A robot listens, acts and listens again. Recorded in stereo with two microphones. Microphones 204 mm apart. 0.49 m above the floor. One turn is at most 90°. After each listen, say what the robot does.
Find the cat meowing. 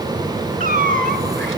Turn 40° right.
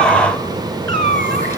Turn 90° right.
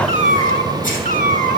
Turn 45° right.
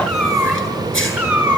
Facing the cat meowing, 2 to 4 m away.